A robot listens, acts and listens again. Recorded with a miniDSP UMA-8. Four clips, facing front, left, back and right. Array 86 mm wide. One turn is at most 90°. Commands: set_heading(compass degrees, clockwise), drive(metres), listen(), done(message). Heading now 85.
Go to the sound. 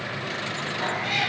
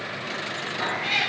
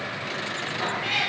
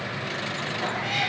set_heading(15)
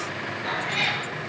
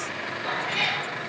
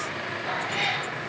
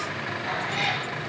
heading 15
drive(1.0)
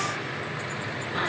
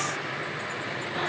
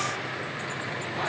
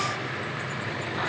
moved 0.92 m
listen()
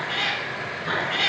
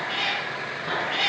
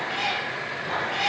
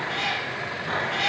drive(1.0)
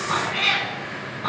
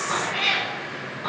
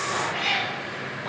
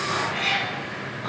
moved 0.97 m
set_heading(355)
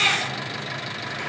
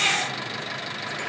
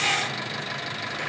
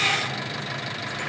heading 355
drive(1.0)
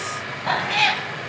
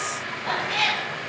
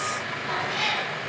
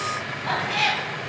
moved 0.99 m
drive(1.0)
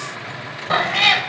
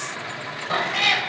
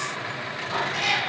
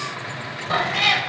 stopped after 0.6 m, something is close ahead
done("Arrived at the cat meowing, straight ahead.")